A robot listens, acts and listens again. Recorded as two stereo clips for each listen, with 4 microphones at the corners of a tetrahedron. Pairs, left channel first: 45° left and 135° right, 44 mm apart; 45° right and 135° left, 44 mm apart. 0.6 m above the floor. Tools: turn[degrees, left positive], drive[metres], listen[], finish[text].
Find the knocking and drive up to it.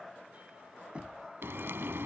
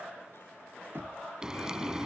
Thought: The knocking: 165° left.
Action: turn[165]
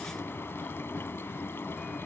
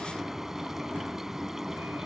Action: listen[]
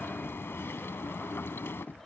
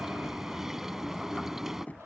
Thought: The knocking is now 10° left.
Action: turn[10]
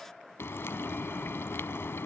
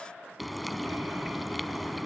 Action: listen[]
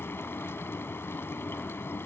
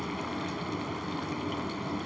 Action: listen[]
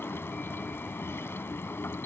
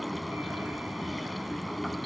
Action: finish[Facing where the knocking came from. I can't hear it now. I did not reach it.]